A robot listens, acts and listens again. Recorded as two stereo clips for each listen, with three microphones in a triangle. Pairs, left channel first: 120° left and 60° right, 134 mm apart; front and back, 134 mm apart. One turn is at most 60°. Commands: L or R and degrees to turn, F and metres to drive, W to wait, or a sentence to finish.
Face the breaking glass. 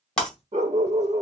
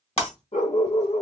L35
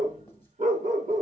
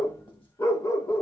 I heard breaking glass from this way, but can't make it out now.